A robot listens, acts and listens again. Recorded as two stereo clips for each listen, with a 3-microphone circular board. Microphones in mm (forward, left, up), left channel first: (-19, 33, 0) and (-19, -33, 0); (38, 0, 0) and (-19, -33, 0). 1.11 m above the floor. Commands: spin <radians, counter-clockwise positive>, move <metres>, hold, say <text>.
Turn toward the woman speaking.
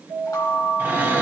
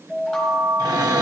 hold
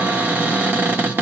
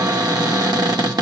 hold
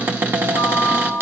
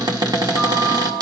say I can't make out a woman speaking, only a cupboard door and a chime.